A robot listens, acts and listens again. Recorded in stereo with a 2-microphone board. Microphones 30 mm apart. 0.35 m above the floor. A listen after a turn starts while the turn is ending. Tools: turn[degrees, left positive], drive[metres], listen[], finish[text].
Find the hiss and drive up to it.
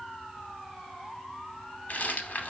Action: listen[]
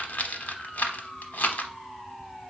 Action: listen[]
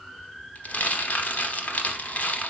Action: finish[I can't make out a hiss to turn to.]